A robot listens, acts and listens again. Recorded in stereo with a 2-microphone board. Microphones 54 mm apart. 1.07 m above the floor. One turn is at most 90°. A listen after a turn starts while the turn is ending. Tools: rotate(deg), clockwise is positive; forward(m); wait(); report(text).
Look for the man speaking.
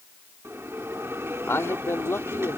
rotate(-60)
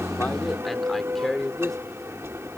report("Found it: a man speaking, straight ahead.")